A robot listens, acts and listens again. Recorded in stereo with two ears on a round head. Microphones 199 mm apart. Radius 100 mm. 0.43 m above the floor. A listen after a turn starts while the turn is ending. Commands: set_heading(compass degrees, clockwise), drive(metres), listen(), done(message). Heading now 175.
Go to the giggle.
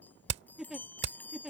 set_heading(205)
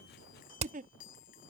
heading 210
set_heading(355)
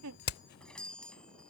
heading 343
set_heading(353)
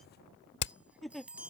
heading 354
drive(1.0)
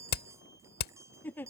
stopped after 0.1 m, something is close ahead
set_heading(344)
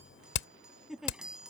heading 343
done("Blocked. The giggle is further on, straight ahead.")